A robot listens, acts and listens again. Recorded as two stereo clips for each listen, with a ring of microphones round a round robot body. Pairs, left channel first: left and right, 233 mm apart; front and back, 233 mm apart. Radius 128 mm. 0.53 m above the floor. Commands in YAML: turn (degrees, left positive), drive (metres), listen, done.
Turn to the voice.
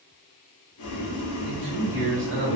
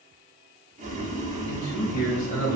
turn: -60
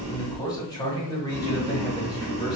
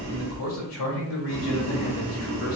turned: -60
turn: 20
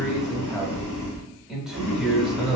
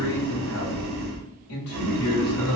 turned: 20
done: "Facing the man speaking, 1 to 2 m away."